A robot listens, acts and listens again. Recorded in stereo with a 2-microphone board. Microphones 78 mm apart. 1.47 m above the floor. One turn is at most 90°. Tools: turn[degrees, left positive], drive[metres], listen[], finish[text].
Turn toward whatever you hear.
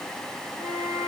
Thought: The flute: about 40° right or 140° right.
Action: turn[-40]
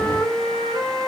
Thought: So it is at 100° right.
Action: turn[-90]
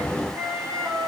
Thought: The flute is now 40° right.
Action: turn[-40]
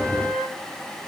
Action: finish[Found it: a flute, straight ahead.]